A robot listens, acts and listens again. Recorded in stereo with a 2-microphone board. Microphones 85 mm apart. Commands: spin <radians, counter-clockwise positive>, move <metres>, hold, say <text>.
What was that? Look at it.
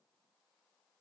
hold
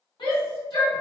spin 1.22
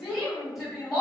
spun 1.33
say Found it: a shout, straight ahead.